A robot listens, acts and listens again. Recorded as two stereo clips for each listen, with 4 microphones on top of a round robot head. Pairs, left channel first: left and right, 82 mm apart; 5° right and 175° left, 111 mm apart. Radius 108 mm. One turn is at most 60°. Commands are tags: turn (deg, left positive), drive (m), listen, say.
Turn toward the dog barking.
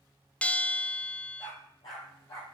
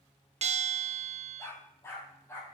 <turn deg="60"/>
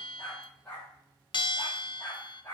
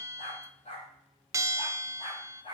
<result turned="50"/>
<turn deg="20"/>
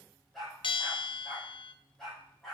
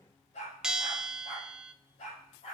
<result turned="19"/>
<say>Found it: a dog barking, straight ahead, over 4 m away.</say>